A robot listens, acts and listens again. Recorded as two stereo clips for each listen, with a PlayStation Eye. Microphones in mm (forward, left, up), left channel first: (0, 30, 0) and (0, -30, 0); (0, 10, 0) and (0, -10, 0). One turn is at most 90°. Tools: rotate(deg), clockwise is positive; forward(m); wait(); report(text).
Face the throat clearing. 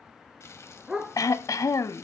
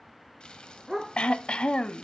rotate(-65)
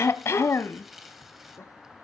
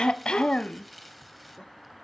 rotate(-45)
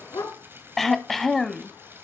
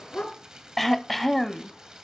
report("Found it: throat clearing, straight ahead.")